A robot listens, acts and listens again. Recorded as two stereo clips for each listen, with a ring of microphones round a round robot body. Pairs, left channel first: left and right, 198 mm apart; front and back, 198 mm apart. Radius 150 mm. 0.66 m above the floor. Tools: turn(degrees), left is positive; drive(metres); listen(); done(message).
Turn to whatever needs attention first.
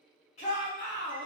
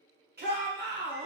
turn(degrees=150)
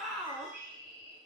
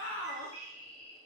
done("Facing the shout.")